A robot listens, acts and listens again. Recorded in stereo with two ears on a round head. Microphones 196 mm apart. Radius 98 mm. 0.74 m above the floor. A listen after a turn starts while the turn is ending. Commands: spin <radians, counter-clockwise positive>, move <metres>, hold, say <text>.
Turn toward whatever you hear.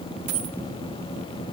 spin -1.57
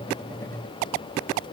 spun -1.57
say I heard a dropped coin from this way, but can't make it out now.